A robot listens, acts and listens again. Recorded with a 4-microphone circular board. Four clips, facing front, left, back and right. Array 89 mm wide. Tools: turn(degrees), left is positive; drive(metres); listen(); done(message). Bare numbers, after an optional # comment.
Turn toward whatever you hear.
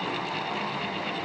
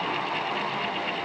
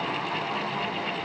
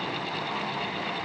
listen()
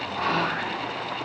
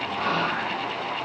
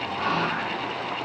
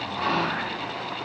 # The whispering: 30° right.
turn(-30)
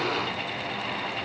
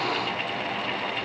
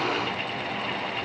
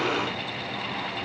listen()
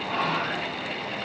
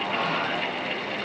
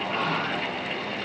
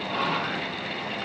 done("Found it: whispering, straight ahead, over 4 m away.")